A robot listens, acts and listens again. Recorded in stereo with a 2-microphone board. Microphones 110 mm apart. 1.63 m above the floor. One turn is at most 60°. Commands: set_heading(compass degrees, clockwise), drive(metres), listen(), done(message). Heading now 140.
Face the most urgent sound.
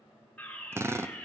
set_heading(110)
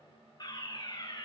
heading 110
set_heading(50)
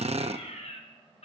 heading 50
set_heading(350)
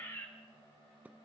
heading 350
set_heading(325)
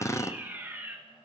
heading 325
set_heading(340)
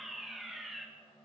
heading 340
done("Found it: a fire alarm, straight ahead, 2 to 4 m away.")